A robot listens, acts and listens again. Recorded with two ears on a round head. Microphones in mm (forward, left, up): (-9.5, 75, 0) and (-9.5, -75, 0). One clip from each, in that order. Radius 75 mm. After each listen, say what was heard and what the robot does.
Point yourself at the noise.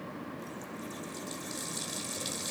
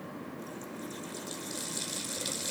Turn 30° left.
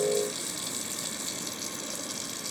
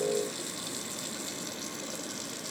So it is at 150° left. Turn 150° left.
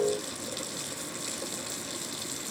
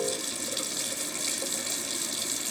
Found it: a running tap, straight ahead.